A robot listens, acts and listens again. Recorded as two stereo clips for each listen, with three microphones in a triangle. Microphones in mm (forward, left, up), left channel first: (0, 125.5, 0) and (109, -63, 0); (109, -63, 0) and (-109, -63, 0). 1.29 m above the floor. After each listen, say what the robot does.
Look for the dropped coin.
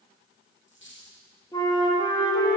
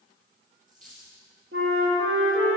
Turn 135° left.
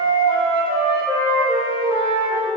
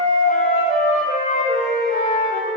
Facing where the dropped coin came from. I can't hear it now.